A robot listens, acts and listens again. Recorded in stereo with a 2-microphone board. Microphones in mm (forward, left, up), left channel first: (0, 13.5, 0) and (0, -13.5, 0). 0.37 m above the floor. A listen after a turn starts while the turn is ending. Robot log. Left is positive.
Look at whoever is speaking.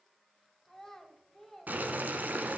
cmd yaw +30
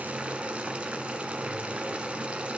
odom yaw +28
cmd idle
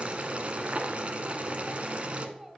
note: So it is at 20° right.
cmd yaw -20
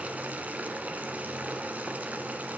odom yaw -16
cmd idle
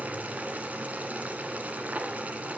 cmd idle
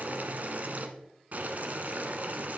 end: I heard a child speaking from this way, but can't make it out now.